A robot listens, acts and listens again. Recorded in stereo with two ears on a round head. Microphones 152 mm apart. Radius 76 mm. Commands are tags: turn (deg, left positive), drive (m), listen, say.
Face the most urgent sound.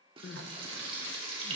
<turn deg="70"/>
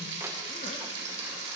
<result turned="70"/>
<listen/>
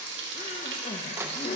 <turn deg="40"/>
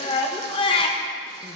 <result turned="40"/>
<turn deg="30"/>
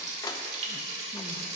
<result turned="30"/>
<listen/>
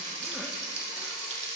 <listen/>
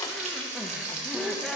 <say>Facing the crying.</say>